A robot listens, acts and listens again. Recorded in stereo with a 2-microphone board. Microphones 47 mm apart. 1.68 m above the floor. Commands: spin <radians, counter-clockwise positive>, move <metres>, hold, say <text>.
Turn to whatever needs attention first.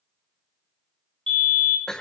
spin 0.35
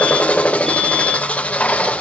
hold
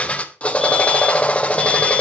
hold
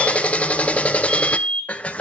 say Found it: a fire alarm, straight ahead, 2 to 4 m away.